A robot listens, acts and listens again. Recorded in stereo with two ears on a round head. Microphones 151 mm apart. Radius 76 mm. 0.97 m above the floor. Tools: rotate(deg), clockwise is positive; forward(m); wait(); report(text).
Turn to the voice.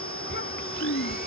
rotate(-65)
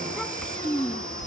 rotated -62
report("Found it: a child speaking, straight ahead.")